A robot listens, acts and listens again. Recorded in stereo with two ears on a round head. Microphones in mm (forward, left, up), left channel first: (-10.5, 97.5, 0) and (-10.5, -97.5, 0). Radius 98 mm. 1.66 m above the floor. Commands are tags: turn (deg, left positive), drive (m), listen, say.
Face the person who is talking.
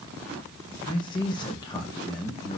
<turn deg="20"/>
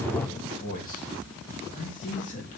<turn deg="40"/>
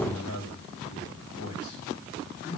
<turn deg="105"/>
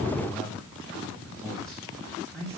<say>Facing the man speaking.</say>